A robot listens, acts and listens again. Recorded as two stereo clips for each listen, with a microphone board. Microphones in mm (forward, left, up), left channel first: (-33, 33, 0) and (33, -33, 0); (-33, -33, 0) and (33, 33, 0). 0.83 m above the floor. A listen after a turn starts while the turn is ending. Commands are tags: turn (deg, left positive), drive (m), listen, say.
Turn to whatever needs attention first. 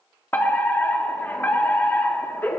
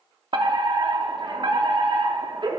<turn deg="70"/>
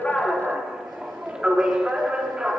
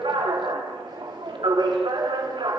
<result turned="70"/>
<turn deg="35"/>
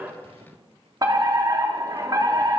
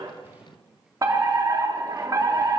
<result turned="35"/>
<say>Facing the fire alarm, 2 to 4 m away.</say>